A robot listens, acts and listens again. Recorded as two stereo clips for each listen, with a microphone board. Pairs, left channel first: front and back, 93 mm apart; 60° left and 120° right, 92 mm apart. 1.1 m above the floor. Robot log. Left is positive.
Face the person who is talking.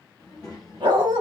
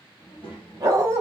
note: The child speaking: 50° left.
cmd yaw +50
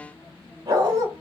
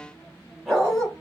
end: Facing the child speaking, 1 to 2 m away.